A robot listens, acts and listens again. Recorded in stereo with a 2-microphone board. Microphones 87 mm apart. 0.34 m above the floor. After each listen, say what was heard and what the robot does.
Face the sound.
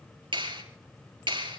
The clap: about 75° right or 105° right. Turn 75° right.
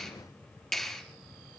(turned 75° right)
Facing the clap.